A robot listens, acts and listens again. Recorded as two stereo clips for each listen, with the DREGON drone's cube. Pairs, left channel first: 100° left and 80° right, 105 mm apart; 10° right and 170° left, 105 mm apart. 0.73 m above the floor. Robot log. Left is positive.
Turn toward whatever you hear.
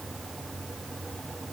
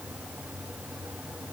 cmd idle
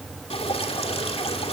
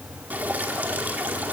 note: The dripping: 95° left.
cmd yaw +95
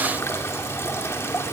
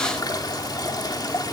note: The dripping is now 35° left.
cmd yaw +35
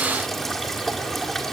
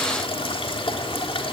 note: The dripping is now 15° left.
cmd yaw +15
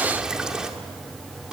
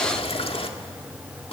end: Found it: dripping, straight ahead.